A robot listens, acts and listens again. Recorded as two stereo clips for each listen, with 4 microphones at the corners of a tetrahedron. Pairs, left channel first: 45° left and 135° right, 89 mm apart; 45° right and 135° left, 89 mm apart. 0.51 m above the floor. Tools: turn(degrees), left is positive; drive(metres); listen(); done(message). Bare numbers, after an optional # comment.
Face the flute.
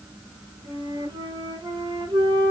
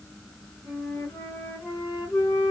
# The flute: 115° right.
turn(-115)
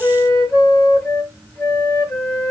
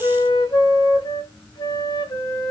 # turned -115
# The flute is now 25° right.
turn(-25)
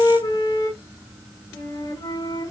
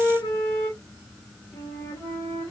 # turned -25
done("Facing the flute, 2 to 4 m away.")